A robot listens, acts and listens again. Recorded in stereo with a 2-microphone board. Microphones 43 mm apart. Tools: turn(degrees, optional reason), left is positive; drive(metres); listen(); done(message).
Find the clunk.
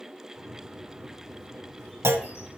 turn(degrees=-90)
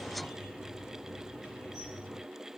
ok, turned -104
turn(degrees=15, reason="Nothing new. It was at 15° left.")
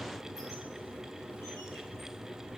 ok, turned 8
done("Facing where the clunk came from. I can't hear it now.")